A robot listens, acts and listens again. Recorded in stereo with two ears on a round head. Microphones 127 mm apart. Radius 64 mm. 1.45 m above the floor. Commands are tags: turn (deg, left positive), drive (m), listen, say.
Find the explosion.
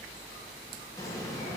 <turn deg="20"/>
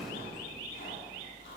<say>Found it: an explosion, straight ahead.</say>